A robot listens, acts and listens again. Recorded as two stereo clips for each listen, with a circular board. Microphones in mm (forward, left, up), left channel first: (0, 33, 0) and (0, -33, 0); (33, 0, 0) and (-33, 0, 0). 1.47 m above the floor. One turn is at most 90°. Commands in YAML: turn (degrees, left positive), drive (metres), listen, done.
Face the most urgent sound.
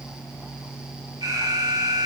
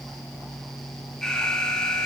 turn: -80
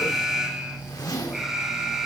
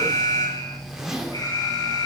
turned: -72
turn: -10
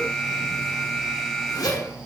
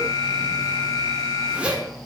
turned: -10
done: "Facing the alarm, over 4 m away."